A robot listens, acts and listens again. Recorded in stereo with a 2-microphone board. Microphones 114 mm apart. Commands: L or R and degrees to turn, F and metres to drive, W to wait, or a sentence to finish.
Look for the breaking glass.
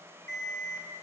W
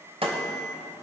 R55
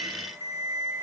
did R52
W
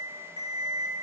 I heard breaking glass, but can't make it out now. It was about straight ahead or 75° right.